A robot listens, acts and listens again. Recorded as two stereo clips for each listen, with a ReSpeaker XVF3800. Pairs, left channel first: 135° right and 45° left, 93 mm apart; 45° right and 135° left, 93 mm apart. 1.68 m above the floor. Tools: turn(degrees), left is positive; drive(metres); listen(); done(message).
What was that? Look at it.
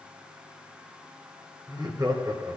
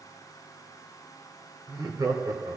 turn(degrees=85)
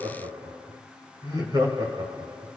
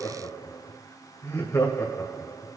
turn(degrees=10)
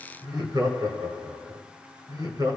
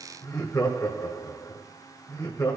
done("Facing the laughter, 1 to 2 m away.")